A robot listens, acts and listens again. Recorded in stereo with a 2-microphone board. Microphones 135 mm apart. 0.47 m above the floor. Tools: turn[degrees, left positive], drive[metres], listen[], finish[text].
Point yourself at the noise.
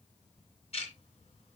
Thought: The ticking: about 50° left or 130° left.
Action: turn[50]
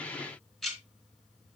Action: finish[Facing the ticking, 2 to 4 m away.]